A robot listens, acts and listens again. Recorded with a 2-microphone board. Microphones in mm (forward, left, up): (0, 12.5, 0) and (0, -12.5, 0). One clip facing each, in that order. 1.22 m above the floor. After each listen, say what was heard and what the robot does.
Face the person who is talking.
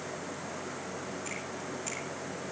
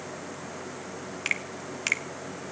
Keep listening.
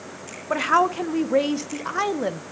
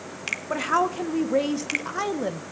The woman speaking: about 20° left or 160° left. Turn 20° left.
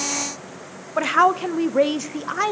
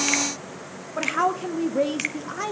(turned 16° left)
So it is at 145° left. Turn 145° left.
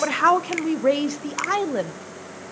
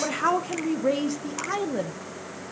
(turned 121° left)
The woman speaking is now 25° left. Turn 25° left.
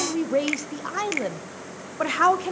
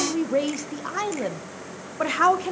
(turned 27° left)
Found it: a woman speaking, straight ahead.